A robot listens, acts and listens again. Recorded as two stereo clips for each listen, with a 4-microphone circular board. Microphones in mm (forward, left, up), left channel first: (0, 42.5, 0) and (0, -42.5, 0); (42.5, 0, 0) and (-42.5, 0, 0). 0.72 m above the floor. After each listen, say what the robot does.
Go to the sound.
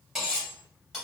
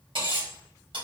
Turn 175° right.
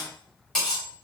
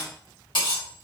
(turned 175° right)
Drive 1.0 m forward.
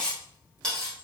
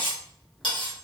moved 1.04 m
Turn 10° left.
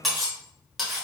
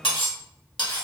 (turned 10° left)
Drive 1.0 m forward.
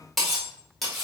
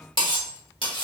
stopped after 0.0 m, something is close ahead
Arrived at the cutlery clinking, straight ahead.